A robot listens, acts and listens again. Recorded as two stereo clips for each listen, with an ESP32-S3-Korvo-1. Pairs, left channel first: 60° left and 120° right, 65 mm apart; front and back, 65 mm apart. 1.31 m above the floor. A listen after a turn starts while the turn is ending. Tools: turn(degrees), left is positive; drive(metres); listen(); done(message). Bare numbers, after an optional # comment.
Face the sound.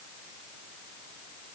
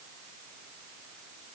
listen()
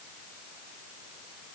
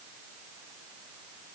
listen()
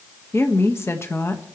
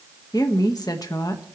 # The woman speaking: 15° left.
turn(15)
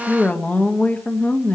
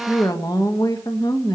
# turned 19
done("Found it: a woman speaking, straight ahead.")